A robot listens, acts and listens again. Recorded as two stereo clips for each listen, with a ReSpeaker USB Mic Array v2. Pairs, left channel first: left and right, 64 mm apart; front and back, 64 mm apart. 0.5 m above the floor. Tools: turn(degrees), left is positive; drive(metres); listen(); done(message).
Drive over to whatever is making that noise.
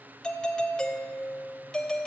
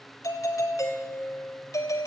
turn(degrees=10)
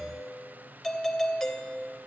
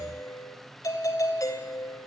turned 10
drive(metres=1.0)
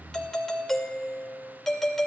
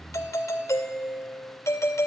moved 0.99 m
turn(degrees=10)
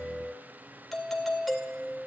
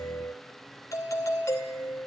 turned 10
drive(metres=1.0)
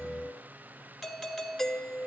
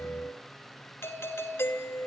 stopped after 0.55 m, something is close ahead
done("I am next to the doorbell.")